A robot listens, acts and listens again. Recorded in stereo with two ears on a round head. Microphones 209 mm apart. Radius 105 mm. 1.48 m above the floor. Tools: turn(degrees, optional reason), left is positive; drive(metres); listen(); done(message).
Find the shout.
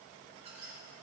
listen()
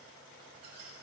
listen()
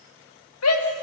turn(degrees=90)
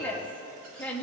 done("Found it: a shout, straight ahead.")